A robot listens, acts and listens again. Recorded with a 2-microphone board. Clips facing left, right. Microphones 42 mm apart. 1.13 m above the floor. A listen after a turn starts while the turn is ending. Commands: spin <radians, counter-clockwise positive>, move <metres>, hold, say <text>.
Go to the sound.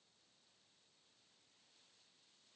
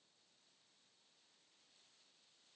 hold
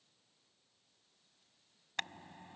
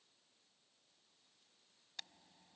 spin 1.13
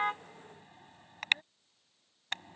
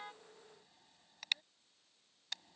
spin 0.87
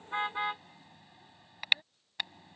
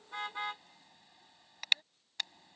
spin 0.26
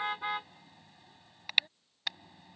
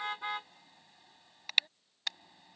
move 1.0
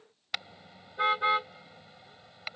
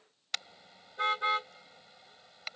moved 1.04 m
spin 0.17
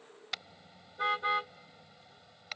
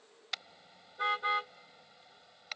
move 1.0
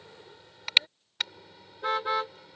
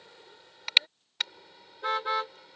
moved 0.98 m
move 1.0
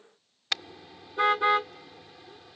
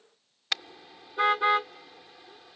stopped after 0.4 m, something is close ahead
say I am next to the car horn.